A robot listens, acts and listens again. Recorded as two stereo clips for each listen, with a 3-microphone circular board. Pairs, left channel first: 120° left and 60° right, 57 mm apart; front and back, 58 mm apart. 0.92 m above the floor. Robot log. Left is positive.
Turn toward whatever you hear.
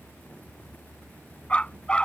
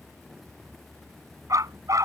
note: The dog barking: 165° right.
cmd yaw -165
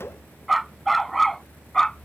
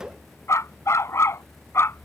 note: The dog barking is now 40° left.
cmd yaw +40
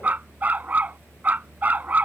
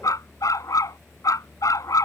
end: Found it: a dog barking, straight ahead.